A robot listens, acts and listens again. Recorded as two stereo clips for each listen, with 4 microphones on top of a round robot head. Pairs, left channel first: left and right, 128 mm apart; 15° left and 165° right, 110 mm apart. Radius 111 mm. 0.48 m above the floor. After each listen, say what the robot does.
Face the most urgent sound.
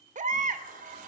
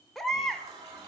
Turn 75° right.
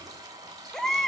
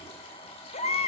Found it: a baby crying, straight ahead, 1 to 2 m away.